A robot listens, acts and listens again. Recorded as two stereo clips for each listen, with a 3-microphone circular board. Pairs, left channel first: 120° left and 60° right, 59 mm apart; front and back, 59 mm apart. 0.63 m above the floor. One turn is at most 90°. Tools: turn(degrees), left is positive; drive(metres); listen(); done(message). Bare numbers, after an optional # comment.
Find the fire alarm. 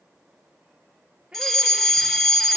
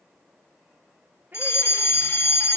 # The fire alarm: 30° left.
turn(30)
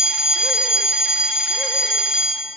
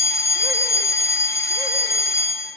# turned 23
done("Found it: a fire alarm, straight ahead.")